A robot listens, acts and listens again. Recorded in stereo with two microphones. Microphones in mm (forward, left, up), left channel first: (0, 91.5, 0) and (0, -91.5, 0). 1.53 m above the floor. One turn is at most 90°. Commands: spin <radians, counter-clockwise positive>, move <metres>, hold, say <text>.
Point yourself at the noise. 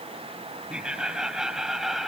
spin 0.52
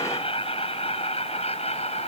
spin 1.57
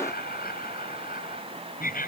spin 0.87
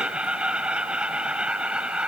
say Found it: laughter, straight ahead.